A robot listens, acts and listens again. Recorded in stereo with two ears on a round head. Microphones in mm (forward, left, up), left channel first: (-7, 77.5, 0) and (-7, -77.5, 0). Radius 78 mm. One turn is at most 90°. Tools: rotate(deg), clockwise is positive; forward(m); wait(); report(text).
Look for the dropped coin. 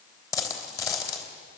rotate(-15)
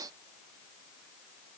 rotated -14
wait()
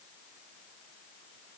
report("I heard a dropped coin, but can't make it out now. It was about 5° left or 150° left.")